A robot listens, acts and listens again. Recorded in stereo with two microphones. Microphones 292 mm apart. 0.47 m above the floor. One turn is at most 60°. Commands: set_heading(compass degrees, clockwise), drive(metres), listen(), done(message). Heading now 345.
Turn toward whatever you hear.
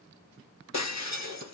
set_heading(285)
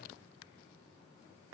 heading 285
listen()
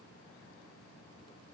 done("I heard breaking glass, but can't make it out now. It was about 5° left or 55° left.")